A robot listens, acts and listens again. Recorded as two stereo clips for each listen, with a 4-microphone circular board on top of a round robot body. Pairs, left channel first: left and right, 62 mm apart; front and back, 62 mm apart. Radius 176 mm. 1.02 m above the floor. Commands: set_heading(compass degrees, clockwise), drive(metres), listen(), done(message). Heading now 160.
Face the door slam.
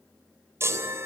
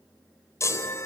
listen()
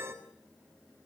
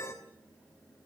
listen()
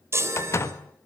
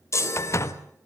set_heading(115)
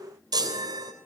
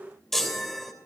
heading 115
done("Facing where the door slam came from. I can't hear it now.")